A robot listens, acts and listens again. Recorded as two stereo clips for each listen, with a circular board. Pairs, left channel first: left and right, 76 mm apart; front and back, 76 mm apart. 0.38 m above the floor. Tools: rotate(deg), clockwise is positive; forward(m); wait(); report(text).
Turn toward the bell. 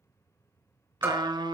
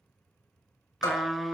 rotate(30)
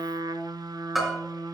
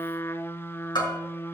report("Facing the bell, 2 to 4 m away.")